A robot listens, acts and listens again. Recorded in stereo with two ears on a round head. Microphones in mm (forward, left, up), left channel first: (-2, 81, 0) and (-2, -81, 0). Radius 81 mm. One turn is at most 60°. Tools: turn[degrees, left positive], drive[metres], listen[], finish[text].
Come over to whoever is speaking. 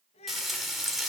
Thought: The child speaking: about 35° left or 145° left.
Action: turn[35]
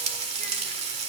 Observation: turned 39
Action: listen[]
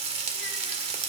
Action: listen[]
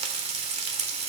Action: finish[I heard a child speaking, but can't make it out now. It was about 5° right or 105° left. I did not reach it.]